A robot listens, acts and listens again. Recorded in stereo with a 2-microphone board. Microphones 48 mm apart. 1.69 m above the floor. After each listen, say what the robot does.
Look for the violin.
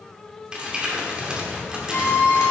Turn 45° left.
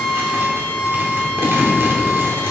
Turn 95° left.
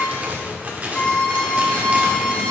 Turn 20° left.
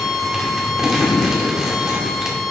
Facing the violin, 1 to 2 m away.